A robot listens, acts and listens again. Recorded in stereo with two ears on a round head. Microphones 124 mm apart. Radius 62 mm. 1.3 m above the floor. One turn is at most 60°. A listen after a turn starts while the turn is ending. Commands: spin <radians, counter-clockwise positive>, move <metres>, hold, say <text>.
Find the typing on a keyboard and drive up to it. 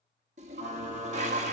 spin -0.44
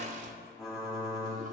move 1.0
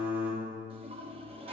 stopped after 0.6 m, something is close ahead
spin -0.26
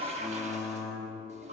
say Blocked. The typing on a keyboard is further on, straight ahead.